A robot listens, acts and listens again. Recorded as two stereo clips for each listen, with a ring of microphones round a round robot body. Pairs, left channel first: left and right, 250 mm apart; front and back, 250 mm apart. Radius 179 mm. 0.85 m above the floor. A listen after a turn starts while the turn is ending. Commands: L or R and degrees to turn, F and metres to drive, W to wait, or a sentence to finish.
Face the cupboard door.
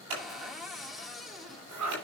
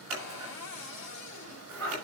Facing the cupboard door.